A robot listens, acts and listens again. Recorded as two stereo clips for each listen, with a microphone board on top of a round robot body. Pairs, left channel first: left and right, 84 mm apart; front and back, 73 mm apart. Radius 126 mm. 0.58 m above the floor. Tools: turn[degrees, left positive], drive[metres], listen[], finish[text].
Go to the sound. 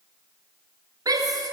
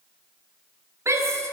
Thought: The shout: 130° right.
Action: turn[-130]
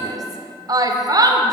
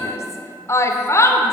Thought: The shout is now 50° right.
Action: turn[-50]
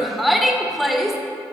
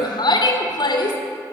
Action: drive[1.0]
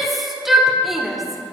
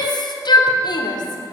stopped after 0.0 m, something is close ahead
Action: finish[Something is in my way. I am facing the shout but have not reached it.]